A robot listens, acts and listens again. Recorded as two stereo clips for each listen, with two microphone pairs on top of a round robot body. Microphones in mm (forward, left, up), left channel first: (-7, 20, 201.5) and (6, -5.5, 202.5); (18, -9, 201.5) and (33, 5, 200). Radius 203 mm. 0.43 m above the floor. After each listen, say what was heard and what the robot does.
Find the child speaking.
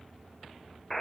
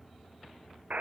Keep listening.
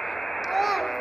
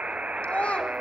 The child speaking: 150° right. Turn 150° right.
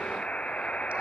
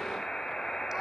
Keep listening.
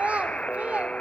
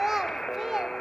The child speaking is now 20° right. Turn 20° right.
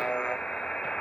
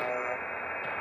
Keep listening.
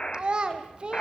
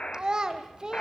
Found it: a child speaking, straight ahead.